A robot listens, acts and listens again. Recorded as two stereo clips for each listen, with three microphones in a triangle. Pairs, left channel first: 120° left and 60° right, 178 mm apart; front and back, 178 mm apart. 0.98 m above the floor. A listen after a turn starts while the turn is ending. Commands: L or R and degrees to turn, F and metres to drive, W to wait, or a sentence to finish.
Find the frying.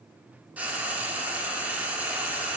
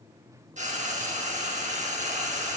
R140
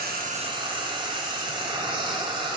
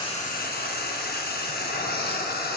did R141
Facing the frying, under 1 m away.